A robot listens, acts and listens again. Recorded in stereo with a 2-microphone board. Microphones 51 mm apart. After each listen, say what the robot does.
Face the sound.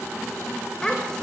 Turn 30° left.
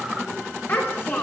Turn 140° left.
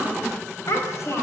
Turn 55° left.
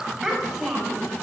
Facing the child speaking, over 4 m away.